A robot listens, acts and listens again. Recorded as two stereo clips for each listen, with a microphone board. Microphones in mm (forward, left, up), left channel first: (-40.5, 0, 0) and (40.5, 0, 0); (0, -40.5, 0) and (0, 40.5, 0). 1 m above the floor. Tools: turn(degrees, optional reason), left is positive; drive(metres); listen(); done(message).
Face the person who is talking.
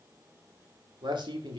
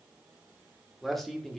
done("Facing the man speaking, 2 to 4 m away.")